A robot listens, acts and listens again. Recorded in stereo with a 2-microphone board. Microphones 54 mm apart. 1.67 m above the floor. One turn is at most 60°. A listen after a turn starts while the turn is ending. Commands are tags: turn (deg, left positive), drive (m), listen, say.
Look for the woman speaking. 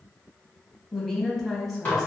<turn deg="30"/>
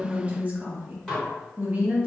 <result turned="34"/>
<turn deg="-25"/>
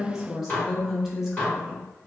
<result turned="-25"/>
<say>Found it: a woman speaking, straight ahead, under 1 m away.</say>